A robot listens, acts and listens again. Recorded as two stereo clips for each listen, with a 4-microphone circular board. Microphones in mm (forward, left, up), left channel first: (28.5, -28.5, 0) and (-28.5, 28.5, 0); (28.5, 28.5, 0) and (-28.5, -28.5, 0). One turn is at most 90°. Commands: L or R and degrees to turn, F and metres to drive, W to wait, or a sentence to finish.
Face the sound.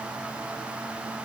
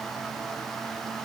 W
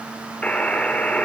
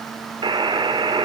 R90
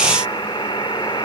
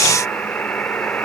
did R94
R25
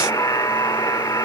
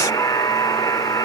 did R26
Found it: a buzzer, straight ahead.